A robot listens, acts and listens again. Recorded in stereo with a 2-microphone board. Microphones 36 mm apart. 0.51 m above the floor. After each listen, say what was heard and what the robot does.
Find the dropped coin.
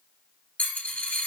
The dropped coin: about 50° left or 130° left. Turn 50° left.
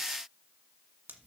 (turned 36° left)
Keep listening.
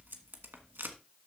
I heard a dropped coin, but can't make it out now. It was about 15° left or 90° left.